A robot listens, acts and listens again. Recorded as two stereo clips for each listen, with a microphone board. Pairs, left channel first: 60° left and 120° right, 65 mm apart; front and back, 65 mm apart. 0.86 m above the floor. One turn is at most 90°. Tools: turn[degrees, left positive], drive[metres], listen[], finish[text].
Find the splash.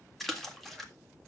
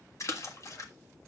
Thought: The splash: 30° right.
Action: turn[-30]
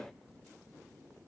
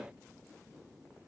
Action: finish[Facing where the splash came from. I can't hear it now.]